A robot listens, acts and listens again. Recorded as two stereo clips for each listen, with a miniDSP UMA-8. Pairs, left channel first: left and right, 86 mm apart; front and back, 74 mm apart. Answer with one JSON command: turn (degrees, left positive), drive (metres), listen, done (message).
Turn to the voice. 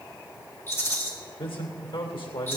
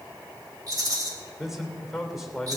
{"turn": 95}
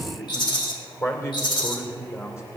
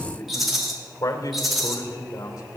{"turn": 35}
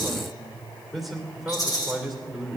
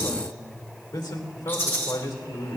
{"done": "Facing the man speaking."}